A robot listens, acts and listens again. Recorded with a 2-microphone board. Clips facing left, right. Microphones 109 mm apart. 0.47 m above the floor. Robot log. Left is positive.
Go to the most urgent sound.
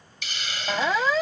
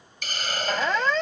cmd yaw +30
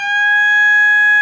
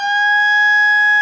note: So it is at 25° right.
cmd yaw -25
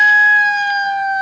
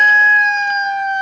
cmd fwd 1.0
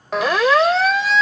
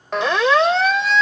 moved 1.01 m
cmd fwd 1.0
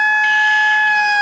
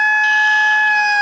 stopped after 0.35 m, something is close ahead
end: I am next to the siren.